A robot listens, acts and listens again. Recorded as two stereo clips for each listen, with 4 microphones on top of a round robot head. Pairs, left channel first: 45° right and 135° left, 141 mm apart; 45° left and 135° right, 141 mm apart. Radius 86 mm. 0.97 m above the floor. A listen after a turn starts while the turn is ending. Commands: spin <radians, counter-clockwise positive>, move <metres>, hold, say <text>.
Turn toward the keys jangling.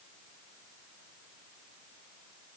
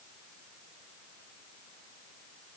hold
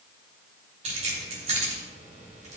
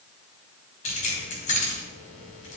spin 1.48
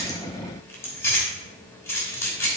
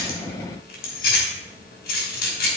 spin 0.44
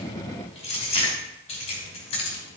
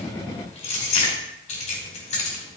say Found it: keys jangling, straight ahead.